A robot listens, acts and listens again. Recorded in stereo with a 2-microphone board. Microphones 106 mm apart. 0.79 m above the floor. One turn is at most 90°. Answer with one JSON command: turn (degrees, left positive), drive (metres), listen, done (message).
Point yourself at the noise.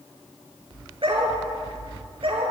{"turn": -55}
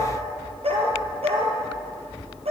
{"turn": -70}
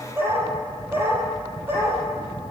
{"turn": -20}
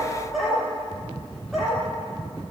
{"done": "Facing the dog barking, over 4 m away."}